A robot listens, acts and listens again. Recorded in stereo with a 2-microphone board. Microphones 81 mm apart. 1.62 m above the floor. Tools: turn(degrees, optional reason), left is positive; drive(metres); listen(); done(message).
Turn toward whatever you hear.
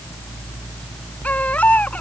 turn(degrees=15, reason="The baby crying: about 15° left or 165° left.")
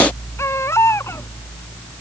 turn(degrees=145, reason="So it is at 145° left.")
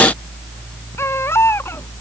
turn(degrees=30, reason="The baby crying is now 30° left.")
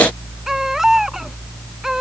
done("Found it: a baby crying, straight ahead.")